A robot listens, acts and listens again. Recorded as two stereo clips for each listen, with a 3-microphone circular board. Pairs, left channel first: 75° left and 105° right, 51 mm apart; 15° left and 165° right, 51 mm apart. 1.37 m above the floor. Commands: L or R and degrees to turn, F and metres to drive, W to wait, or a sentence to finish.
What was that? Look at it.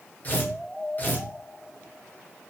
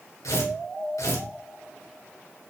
L20
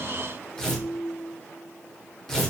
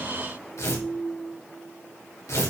Facing the tearing paper.